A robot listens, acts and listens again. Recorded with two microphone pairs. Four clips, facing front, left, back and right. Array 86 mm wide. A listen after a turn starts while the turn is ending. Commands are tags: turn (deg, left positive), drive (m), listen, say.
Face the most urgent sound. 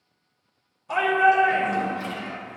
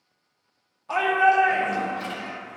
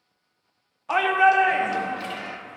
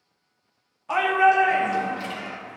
<turn deg="-175"/>
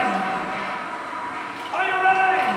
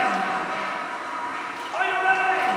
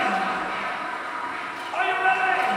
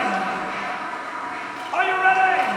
<turn deg="-70"/>
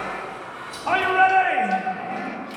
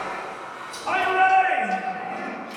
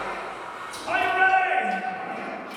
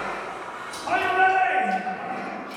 <say>Found it: a shout, straight ahead, 1 to 2 m away.</say>